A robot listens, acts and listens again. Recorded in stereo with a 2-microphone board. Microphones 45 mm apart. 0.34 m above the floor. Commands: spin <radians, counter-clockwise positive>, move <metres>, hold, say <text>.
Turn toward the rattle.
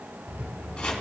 spin -0.87
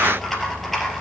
say Facing the rattle.